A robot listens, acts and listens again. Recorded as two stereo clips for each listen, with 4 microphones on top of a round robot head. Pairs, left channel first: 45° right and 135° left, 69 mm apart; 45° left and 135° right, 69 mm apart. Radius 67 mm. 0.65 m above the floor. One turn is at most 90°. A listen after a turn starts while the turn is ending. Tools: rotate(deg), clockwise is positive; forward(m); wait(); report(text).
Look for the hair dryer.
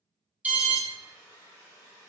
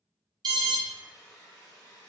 report("Facing the hair dryer.")